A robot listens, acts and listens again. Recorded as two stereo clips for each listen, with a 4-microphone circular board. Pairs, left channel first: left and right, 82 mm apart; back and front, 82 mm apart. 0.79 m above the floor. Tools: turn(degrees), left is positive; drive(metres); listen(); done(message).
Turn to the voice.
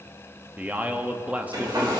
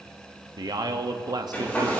turn(degrees=-20)
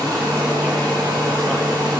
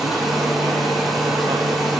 listen()
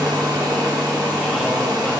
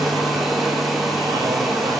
listen()
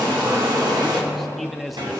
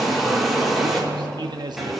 done("Facing the man speaking.")